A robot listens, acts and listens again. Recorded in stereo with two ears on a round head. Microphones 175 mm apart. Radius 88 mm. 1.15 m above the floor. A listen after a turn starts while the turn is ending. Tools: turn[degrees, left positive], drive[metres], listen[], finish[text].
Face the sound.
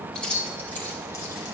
Action: turn[30]
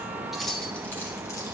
Action: turn[30]
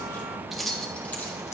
Action: turn[30]
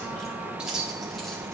Action: finish[Facing the keys jangling, 1 to 2 m away.]